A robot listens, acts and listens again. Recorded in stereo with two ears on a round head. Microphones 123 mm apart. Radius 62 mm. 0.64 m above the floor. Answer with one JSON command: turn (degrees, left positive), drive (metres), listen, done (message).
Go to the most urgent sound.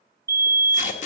{"turn": -25}
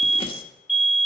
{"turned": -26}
{"drive": 1.0}
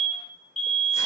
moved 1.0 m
{"drive": 1.0}
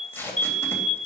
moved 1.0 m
{"drive": 1.0}
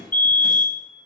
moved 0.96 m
{"turn": 20}
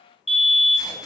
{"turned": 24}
{"drive": 1.0}
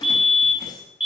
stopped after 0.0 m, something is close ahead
{"done": "I am next to the fire alarm."}